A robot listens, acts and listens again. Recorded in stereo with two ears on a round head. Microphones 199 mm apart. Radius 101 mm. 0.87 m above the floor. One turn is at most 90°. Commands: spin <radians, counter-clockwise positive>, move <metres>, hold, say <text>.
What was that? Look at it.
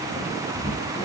spin 0.35
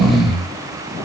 say Facing the snoring.